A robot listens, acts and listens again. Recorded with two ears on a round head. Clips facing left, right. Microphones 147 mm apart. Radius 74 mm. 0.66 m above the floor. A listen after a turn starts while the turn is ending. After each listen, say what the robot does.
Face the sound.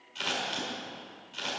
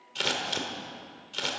Turn 70° right.
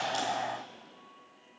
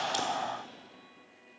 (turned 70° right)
Keep listening.
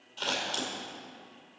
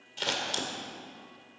Turn 20° right.
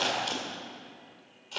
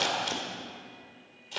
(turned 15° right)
Found it: scissors, straight ahead, 1 to 2 m away.